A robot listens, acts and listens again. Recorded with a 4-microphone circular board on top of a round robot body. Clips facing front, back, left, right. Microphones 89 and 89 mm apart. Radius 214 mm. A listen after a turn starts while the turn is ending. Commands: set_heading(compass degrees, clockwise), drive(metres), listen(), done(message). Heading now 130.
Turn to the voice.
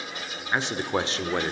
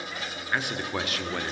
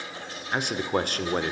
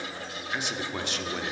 set_heading(75)
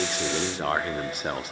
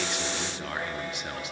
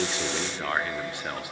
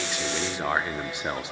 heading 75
set_heading(105)
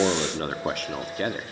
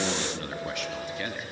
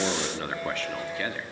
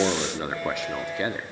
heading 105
set_heading(135)
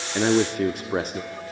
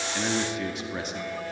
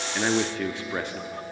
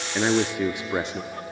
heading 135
set_heading(160)
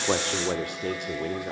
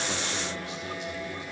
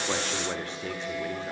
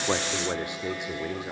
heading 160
set_heading(175)
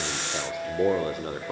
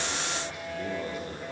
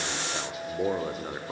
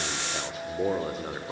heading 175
done("Found it: a man speaking, straight ahead, 1 to 2 m away.")